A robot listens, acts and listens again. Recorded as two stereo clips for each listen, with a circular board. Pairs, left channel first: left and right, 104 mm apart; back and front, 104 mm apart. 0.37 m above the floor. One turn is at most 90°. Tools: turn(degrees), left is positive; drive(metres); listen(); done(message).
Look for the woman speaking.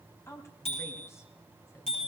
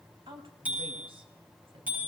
turn(degrees=25)
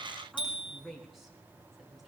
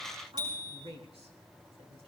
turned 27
done("Found it: a woman speaking, straight ahead, 2 to 4 m away.")